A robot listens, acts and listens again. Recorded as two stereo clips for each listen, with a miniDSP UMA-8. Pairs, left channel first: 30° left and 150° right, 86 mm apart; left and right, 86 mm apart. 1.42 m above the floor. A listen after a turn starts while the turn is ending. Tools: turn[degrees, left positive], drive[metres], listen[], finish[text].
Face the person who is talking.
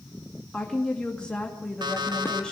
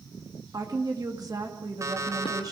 Thought: The woman speaking: 50° right.
Action: turn[-50]
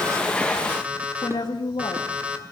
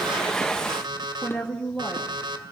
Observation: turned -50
Thought: The woman speaking is now 10° left.
Action: turn[10]
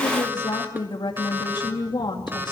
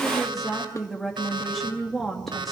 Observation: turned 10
Action: finish[Found it: a woman speaking, straight ahead, 2 to 4 m away.]